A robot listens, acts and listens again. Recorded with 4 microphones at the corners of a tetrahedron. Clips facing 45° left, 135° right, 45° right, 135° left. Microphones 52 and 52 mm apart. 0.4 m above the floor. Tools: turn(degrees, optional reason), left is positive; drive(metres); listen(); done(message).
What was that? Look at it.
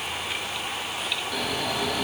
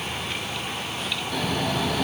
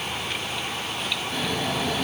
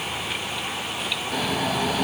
turn(degrees=140, reason="The snoring: 140° left.")
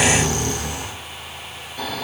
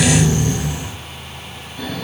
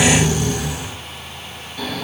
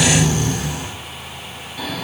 turn(degrees=40, reason="The snoring is now 40° left.")
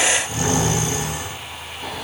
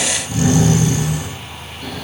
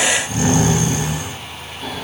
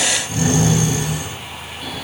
turn(degrees=-10, reason="The snoring is now 10° right.")
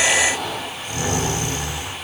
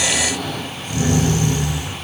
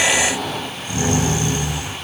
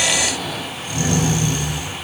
done("Found it: snoring, straight ahead.")